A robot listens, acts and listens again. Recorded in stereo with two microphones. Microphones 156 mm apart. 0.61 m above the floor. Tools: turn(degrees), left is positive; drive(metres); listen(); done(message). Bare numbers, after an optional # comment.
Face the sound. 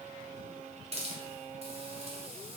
# The hiss: about 45° right or 135° right.
turn(-45)
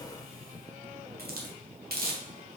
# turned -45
# So it is at 90° right.
turn(-90)
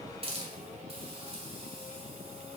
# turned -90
# The hiss is now 40° right.
turn(-40)
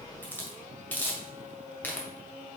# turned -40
# The hiss is now 10° left.
turn(10)
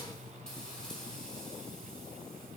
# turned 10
done("Facing the hiss.")